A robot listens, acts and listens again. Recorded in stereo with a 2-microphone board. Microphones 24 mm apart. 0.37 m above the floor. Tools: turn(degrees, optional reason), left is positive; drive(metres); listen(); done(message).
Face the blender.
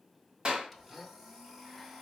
turn(degrees=-30)
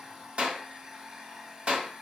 turn(degrees=-150, reason="So it is at 150° right.")
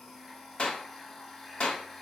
turn(degrees=10, reason="The blender is now 10° left.")
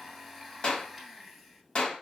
done("Found it: a blender, straight ahead.")